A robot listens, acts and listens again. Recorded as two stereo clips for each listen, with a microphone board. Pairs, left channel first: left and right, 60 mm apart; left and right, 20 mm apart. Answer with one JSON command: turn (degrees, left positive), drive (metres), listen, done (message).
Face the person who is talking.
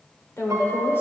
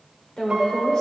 {"turn": 45}
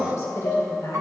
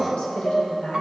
{"turn": 80}
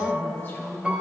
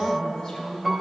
{"turn": 35}
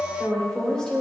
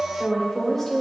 {"turn": 10}
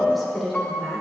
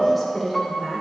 {"done": "Facing the woman speaking, 1 to 2 m away."}